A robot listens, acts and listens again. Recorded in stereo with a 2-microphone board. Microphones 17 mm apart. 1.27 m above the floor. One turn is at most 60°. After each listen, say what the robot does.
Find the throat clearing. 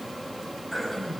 Turn 30° left.
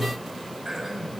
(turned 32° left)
Turn 30° right.
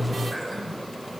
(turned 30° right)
Found it: throat clearing, straight ahead.